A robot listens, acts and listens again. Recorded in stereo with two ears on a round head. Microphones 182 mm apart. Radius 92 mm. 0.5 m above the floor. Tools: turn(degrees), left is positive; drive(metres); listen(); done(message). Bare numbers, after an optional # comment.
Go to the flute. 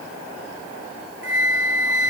# The flute: about 65° right or 115° right.
turn(-65)
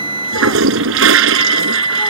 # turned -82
# So it is at 25° right.
turn(-25)
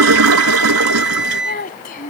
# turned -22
drive(1.0)
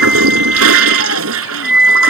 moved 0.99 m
drive(1.0)
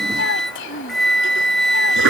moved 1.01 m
drive(1.0)
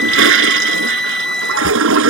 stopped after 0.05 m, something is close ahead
done("Arrived at the flute, straight ahead.")